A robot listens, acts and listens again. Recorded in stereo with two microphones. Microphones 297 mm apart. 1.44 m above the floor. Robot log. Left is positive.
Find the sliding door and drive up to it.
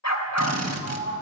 cmd yaw -30
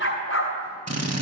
cmd idle
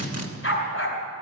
cmd idle
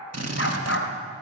end: I heard a sliding door, but can't make it out now. It was about 20° left or 140° right. I did not reach it.